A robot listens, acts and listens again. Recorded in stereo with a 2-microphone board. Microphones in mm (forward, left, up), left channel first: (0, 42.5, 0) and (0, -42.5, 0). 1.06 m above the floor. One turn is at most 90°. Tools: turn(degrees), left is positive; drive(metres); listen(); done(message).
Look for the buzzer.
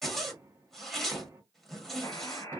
turn(degrees=55)
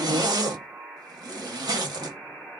done("Facing the buzzer, 1 to 2 m away.")